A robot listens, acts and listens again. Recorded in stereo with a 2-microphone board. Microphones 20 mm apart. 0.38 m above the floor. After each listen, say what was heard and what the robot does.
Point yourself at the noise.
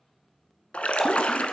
Turn 90° left.
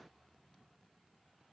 Facing where the splash came from. I can't hear it now.